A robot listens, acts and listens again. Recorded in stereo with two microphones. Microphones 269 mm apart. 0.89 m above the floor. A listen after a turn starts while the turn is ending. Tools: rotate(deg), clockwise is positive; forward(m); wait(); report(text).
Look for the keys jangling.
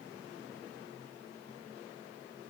wait()
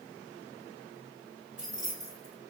rotate(-30)
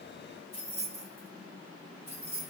rotate(-140)
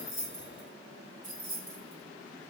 rotate(30)
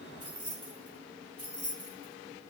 rotate(15)
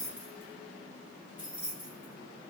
report("Found it: keys jangling, straight ahead.")